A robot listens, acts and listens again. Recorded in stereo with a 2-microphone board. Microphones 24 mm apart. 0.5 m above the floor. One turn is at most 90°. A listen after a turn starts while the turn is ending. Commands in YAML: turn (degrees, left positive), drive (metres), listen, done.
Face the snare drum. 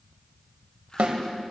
turn: -75
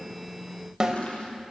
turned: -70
turn: -30
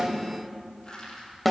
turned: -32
done: "Found it: a snare drum, straight ahead."